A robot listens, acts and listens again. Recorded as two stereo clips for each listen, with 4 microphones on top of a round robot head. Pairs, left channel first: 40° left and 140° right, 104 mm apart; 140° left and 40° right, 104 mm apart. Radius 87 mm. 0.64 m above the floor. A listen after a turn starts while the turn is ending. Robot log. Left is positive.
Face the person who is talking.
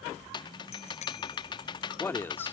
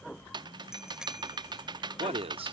note: The man speaking: 30° right.
cmd yaw -30
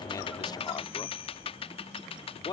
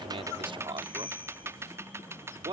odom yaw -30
end: Facing the man speaking.